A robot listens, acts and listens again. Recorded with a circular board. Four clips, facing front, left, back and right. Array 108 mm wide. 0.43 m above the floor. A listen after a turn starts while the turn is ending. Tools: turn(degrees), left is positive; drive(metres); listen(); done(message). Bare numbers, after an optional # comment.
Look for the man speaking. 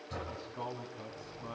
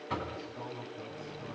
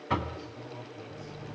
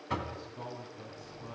done("Facing the man speaking.")